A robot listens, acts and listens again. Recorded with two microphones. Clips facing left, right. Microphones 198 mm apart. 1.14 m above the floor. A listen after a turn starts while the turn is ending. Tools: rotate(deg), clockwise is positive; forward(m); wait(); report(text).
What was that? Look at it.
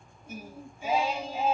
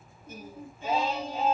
rotate(-30)
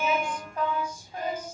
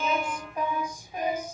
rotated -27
rotate(15)
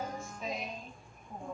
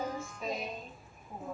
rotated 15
report("Facing the singing.")